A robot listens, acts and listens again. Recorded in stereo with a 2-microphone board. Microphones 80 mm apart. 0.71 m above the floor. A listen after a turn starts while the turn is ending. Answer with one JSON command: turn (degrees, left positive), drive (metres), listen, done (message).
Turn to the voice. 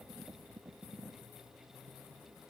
{"listen": true}
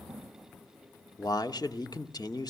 {"turn": 55}
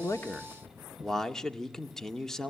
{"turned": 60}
{"done": "Facing the man speaking, 1 to 2 m away."}